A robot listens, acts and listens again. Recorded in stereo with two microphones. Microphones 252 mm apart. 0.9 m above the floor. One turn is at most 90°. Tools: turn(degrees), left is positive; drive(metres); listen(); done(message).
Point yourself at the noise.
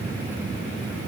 listen()
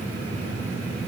listen()
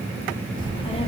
turn(degrees=25)
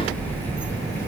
turn(degrees=30)
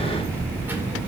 done("Found it: a child speaking, straight ahead, 2 to 4 m away.")